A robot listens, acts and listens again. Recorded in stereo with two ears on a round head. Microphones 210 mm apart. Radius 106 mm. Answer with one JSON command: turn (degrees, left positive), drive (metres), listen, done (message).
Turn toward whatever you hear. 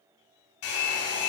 {"turn": 65}
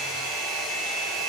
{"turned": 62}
{"done": "Found it: a hair dryer, straight ahead."}